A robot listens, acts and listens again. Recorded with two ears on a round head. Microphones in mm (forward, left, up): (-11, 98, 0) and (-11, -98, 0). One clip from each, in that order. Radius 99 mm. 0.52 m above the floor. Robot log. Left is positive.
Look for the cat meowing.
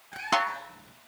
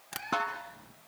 cmd yaw +90
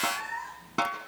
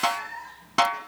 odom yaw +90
note: So it is at 25° left.
cmd yaw +25
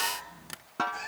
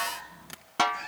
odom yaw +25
note: The cat meowing is now 15° left.
cmd yaw +15
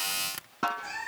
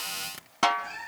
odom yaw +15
note: The cat meowing is now 20° left.
cmd yaw +20
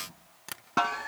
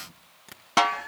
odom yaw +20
note: The cat meowing is now 10° left.
cmd yaw +10
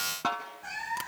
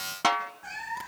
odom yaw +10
end: Found it: a cat meowing, straight ahead, 2 to 4 m away.